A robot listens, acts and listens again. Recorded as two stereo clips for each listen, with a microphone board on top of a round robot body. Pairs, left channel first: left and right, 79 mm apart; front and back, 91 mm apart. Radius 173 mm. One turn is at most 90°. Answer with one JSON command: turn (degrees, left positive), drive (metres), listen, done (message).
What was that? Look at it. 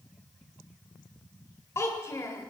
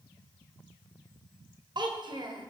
{"turn": 90}
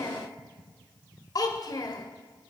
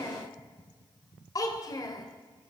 {"turn": 50}
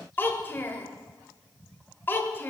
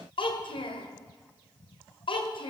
{"turn": 25}
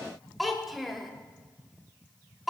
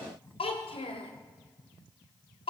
{"done": "Facing the child speaking."}